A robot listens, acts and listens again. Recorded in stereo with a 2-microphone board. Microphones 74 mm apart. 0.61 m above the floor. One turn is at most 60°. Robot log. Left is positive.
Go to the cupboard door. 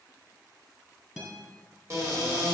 note: The cupboard door: about 40° right or 140° right.
cmd yaw -40
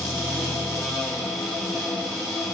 cmd fwd 1.0
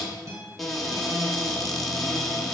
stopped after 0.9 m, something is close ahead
end: Arrived at the cupboard door, straight ahead.